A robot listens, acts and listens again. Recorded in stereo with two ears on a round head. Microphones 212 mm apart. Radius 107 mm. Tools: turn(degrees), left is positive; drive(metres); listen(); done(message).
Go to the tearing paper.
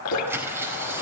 turn(degrees=-30)
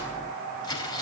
turn(degrees=20)
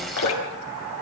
listen()
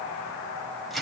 drive(metres=1.0)
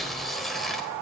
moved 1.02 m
drive(metres=1.0)
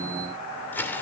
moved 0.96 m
turn(degrees=10)
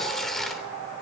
drive(metres=1.0)
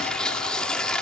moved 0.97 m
drive(metres=1.0)
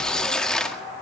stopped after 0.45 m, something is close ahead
done("I am next to the tearing paper.")